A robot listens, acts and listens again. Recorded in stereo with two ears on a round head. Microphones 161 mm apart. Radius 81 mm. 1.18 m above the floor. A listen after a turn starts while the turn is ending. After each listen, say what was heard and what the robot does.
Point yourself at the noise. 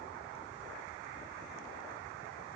Keep listening.
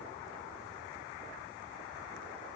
Keep listening.
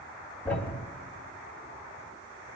Turn 30° left.
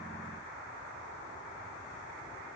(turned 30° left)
Keep listening.
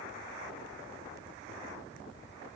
I heard a thud, but can't make it out now. It was about 20° right or 140° left.